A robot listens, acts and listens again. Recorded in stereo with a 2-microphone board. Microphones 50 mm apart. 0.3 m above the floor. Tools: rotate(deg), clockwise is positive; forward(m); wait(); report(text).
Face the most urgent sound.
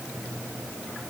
wait()
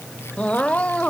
rotate(-25)
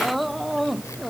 report("Found it: crying, straight ahead.")